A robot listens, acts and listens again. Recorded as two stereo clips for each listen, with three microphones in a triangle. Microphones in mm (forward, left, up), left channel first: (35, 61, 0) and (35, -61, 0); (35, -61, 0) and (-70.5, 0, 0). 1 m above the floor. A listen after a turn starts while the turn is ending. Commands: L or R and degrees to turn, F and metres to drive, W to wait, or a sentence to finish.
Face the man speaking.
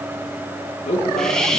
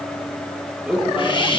L65
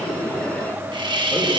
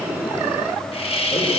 W
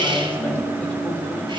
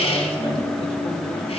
L15
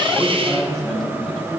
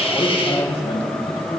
Found it: a man speaking, straight ahead, over 4 m away.